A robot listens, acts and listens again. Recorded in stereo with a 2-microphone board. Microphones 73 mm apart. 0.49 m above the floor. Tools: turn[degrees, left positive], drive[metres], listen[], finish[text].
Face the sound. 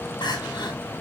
Thought: The crying: about 75° left or 105° left.
Action: turn[75]
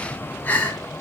Thought: So it is at 25° left.
Action: turn[25]
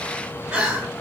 Thought: The crying is now 10° right.
Action: turn[-10]
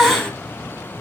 Action: finish[Facing the crying, 2 to 4 m away.]